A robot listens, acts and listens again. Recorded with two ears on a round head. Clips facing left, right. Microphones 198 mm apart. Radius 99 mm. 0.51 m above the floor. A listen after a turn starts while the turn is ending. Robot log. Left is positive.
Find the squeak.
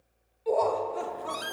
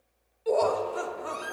note: The squeak: about 50° left or 130° left.
cmd yaw +50
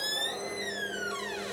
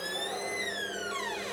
end: Facing the squeak, 1 to 2 m away.